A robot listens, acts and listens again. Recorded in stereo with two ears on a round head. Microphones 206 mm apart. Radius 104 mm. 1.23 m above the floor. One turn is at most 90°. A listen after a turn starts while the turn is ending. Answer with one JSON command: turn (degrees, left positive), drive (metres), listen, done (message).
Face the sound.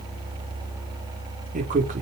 {"turn": -35}
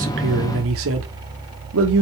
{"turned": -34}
{"turn": -90}
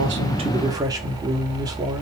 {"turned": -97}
{"turn": -15}
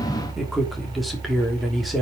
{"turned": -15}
{"done": "Found it: a man speaking, straight ahead, 2 to 4 m away."}